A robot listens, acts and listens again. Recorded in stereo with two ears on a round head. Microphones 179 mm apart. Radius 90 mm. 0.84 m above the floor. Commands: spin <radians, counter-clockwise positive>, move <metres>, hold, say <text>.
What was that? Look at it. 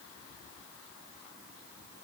hold
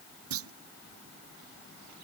spin -1.57
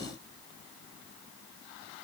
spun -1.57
say Facing where the clunk came from. I can't hear it now.